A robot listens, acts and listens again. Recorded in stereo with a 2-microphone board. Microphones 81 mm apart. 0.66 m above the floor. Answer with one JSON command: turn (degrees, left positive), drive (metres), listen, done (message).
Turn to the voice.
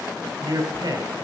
{"turn": -65}
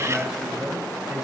{"turn": -10}
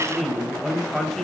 {"done": "Found it: a man speaking, straight ahead, 2 to 4 m away."}